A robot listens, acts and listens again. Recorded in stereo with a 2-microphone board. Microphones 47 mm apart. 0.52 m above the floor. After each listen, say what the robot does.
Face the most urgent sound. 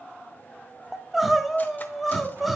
Turn 30° right.
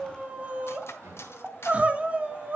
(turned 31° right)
Turn 145° right.
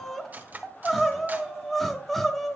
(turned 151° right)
Facing the crying, under 1 m away.